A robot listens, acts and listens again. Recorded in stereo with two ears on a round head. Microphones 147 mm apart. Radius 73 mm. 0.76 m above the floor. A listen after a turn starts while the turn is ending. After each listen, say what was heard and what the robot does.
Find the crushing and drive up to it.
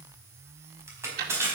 The crushing: about 15° right or 165° right. Turn 15° right.
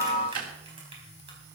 Keep listening.
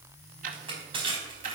So it is at 145° right. Turn 145° right.
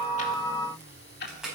Drive 1.0 m forward.
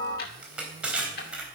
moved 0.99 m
Drive 1.0 m forward.
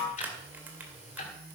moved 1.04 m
Keep listening.
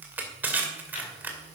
The crushing is now 10° right. Turn 10° right.
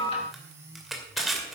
Drive 1.0 m forward.
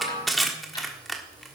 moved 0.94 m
Drive 1.0 m forward.
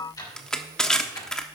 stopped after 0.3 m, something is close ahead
I am next to the crushing.